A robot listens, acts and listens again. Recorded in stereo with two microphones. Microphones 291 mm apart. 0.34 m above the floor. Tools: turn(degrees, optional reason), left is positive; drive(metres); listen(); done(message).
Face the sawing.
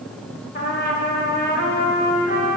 listen()
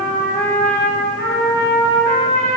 listen()
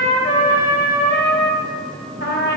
done("I can't make out sawing, only a trumpet.")